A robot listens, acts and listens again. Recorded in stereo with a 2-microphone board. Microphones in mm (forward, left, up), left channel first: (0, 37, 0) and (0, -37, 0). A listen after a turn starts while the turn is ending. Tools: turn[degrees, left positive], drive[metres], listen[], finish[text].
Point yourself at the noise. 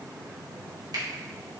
Action: listen[]
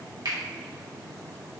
Thought: The finger snap: about 65° right or 115° right.
Action: turn[-65]
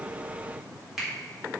Action: finish[Facing the finger snap, 2 to 4 m away.]